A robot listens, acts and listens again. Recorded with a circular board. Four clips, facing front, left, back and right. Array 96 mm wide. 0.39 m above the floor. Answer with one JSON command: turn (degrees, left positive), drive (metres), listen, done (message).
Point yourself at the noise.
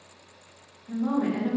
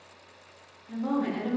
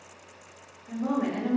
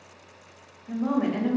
{"turn": -125}
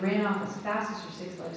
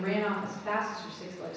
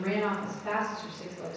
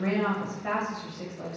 {"turn": -65}
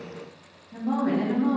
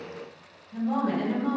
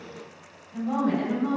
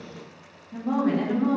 {"turn": -50}
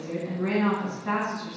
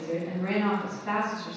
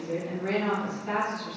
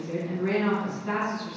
{"turn": 25}
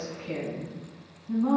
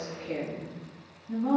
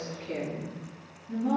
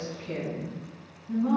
{"turn": 10}
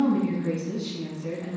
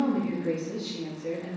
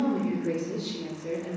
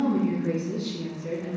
{"done": "Facing the woman speaking, 2 to 4 m away."}